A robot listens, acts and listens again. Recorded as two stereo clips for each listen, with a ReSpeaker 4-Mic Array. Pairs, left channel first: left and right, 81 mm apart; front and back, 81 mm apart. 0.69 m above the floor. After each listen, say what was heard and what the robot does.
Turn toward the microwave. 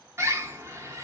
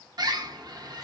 Keep listening.
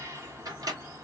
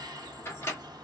The microwave: 55° right. Turn 55° right.
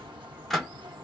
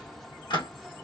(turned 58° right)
Found it: a microwave, straight ahead, 1 to 2 m away.